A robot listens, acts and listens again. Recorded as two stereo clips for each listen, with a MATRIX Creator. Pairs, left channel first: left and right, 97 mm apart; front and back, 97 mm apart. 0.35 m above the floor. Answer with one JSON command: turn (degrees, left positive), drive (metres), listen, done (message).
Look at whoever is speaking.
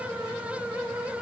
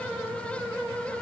{"listen": true}
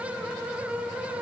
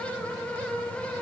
{"listen": true}
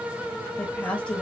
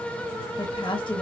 {"turn": 15}
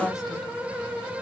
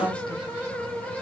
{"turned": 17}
{"done": "Facing the woman speaking, 1 to 2 m away."}